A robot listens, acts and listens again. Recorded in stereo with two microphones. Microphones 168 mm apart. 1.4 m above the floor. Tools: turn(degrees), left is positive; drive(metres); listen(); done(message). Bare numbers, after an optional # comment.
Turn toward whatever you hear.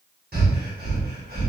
# The breathing: about 70° right or 110° right.
turn(-70)
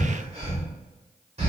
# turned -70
# So it is at 40° right.
turn(-40)
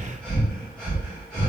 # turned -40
done("Found it: breathing, straight ahead, 1 to 2 m away.")